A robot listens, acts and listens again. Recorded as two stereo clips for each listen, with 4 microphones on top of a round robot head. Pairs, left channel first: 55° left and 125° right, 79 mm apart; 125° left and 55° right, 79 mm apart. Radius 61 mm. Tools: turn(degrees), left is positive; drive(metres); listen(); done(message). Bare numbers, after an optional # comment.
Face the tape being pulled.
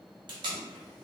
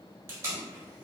# The tape being pulled: 110° right.
turn(-110)
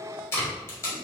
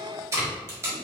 done("Facing the tape being pulled, 1 to 2 m away.")